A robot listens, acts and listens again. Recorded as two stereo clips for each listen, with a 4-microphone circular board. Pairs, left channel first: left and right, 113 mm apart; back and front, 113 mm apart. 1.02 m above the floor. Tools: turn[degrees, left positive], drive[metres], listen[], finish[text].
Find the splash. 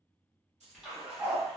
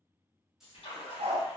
Thought: The splash: 175° right.
Action: turn[-175]
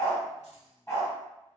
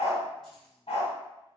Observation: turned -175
Action: finish[I heard a splash from this way, but can't make it out now.]